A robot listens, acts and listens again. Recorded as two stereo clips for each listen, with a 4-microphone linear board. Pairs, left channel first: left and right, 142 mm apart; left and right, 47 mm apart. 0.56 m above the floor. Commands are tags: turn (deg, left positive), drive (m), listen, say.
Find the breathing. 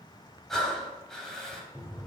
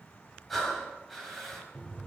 <turn deg="30"/>
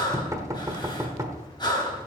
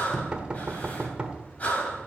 <turn deg="150"/>
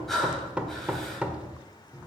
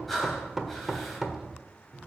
<say>Facing the breathing.</say>